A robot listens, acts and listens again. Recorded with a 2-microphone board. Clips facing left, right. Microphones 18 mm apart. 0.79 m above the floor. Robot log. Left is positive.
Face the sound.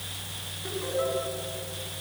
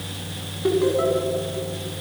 cmd yaw -30
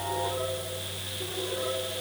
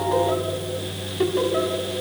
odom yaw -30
note: So it is at 120° right.
cmd yaw -120
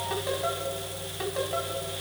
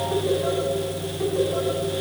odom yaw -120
note: The laughter is now 40° left.
cmd yaw +40
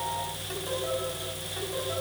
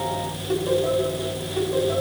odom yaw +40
end: Facing the laughter, over 4 m away.